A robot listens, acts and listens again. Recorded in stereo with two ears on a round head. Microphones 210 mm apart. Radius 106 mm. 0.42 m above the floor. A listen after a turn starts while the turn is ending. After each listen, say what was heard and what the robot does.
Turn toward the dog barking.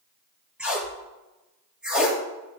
Keep listening.
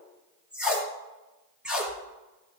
Keep listening.
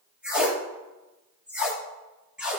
I can't make out a dog barking to turn to.